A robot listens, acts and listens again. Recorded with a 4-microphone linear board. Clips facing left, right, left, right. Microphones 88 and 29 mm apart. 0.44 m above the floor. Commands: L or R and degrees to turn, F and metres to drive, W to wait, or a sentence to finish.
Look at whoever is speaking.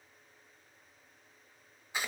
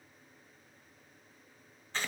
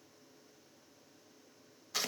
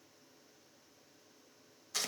W
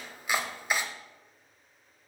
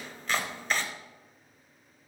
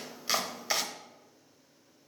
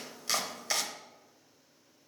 W
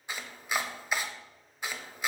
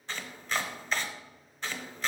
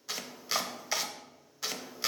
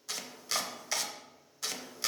I can't make out anyone speaking to turn to.